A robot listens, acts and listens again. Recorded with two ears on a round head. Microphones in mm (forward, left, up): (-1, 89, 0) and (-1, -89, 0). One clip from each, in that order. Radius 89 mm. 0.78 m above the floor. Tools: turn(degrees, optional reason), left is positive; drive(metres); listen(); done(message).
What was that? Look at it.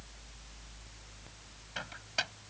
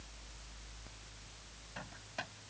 turn(degrees=70, reason="The microwave: about 70° left or 110° left.")
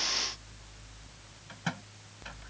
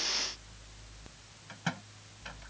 done("Facing the microwave.")